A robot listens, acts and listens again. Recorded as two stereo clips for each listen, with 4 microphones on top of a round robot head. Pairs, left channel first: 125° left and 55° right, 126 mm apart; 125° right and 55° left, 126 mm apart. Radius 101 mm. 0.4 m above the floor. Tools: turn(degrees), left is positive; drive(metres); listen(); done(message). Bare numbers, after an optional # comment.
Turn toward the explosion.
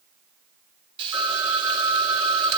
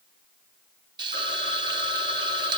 listen()
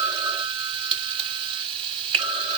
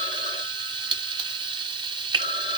listen()
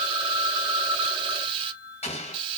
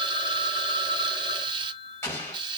# The explosion: 165° left.
turn(165)
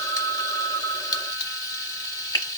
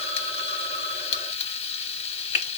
done("I heard an explosion from this way, but can't make it out now.")